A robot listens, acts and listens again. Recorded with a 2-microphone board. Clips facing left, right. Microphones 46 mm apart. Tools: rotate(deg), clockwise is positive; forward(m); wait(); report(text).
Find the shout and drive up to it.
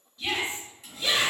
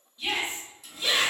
rotate(30)
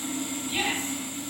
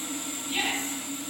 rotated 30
rotate(140)
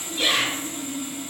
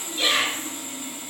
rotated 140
rotate(-10)
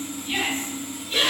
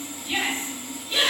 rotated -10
forward(1.0)
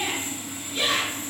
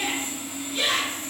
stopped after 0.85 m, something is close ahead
report("I am next to the shout.")